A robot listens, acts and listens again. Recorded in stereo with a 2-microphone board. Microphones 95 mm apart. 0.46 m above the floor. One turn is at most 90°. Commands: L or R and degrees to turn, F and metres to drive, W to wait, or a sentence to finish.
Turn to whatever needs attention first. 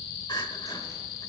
L55
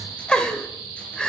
L10
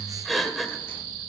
Found it: crying, straight ahead, 1 to 2 m away.